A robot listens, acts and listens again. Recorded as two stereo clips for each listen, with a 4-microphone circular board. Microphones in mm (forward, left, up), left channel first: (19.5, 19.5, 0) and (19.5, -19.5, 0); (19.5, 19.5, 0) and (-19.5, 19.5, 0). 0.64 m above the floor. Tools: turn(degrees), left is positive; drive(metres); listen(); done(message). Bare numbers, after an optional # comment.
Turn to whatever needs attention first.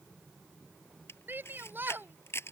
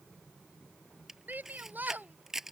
# The shout: 135° right.
turn(-135)
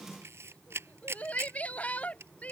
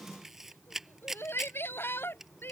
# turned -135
# The shout is now 30° left.
turn(30)
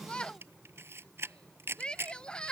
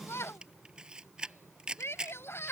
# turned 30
# The shout is now 15° left.
turn(15)
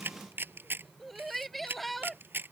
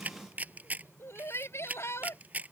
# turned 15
done("Found it: a shout, straight ahead.")